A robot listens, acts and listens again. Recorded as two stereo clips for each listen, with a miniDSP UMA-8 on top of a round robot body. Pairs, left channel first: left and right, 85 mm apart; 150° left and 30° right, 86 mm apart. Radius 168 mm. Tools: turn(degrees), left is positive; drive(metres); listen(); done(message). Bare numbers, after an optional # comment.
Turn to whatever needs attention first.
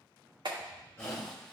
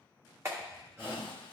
# The shout: 35° left.
turn(35)
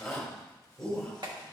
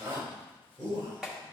done("Facing the shout, 2 to 4 m away.")